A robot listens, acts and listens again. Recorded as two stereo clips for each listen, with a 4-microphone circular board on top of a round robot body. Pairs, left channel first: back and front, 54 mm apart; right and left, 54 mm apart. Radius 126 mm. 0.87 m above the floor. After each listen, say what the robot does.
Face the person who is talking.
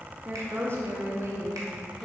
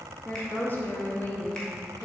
Turn 25° right.
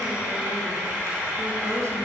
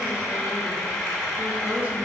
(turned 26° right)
Keep listening.
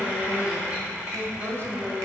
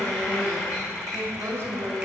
Turn 45° left.
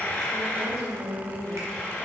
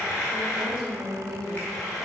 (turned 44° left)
Turn 15° left.
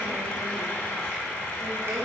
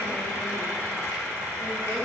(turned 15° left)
Keep listening.
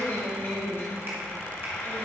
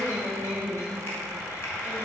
Found it: a woman speaking, straight ahead, 2 to 4 m away.